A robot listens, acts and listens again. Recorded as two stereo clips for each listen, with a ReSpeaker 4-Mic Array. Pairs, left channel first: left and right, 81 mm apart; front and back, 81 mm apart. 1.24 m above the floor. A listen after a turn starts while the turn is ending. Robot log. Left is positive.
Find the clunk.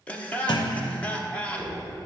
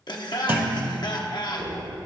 note: The clunk: 115° left.
cmd yaw +115
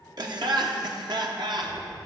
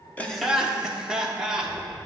end: I heard a clunk from this way, but can't make it out now.